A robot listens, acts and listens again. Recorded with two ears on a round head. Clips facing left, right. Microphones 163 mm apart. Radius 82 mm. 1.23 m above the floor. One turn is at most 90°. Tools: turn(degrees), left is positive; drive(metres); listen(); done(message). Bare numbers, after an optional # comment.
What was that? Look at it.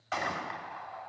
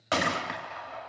turn(-90)
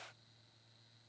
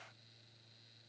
done("I heard a gunshot from this way, but can't make it out now.")